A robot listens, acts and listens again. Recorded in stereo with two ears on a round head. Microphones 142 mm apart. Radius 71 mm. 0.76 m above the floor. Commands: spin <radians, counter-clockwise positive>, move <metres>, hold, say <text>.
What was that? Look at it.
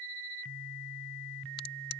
spin 1.31
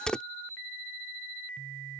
say Facing the crack.